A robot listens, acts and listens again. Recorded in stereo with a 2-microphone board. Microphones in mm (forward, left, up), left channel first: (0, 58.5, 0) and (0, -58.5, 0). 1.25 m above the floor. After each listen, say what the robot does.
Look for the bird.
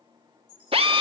Turn 40° left.
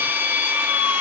Keep listening.
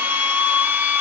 Keep listening.
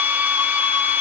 I heard a bird, but can't make it out now. It was about straight ahead or 100° left.